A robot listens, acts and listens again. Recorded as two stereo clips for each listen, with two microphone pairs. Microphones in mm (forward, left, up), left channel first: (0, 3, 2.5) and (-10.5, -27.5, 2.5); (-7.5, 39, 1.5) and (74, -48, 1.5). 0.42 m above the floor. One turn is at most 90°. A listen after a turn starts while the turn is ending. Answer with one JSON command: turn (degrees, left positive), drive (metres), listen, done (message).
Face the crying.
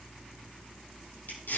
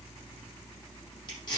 {"listen": true}
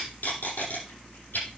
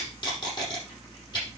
{"listen": true}
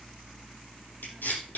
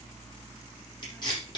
{"done": "I can't make out crying, only tape being pulled."}